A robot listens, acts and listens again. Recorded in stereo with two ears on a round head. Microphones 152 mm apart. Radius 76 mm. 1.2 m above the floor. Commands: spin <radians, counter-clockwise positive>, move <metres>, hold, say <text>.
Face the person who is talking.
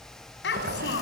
spin 1.57
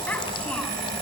hold
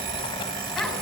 hold
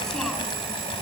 say Facing where the child speaking came from. I can't hear it now.